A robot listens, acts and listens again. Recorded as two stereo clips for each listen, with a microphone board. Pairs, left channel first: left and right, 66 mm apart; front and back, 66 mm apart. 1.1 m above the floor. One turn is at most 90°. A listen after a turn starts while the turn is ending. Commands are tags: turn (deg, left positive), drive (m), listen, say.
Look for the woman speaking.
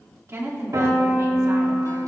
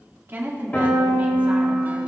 <turn deg="-90"/>
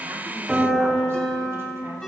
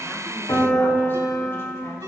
<turn deg="-35"/>
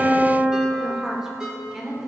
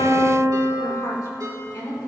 <say>Facing the woman speaking, 2 to 4 m away.</say>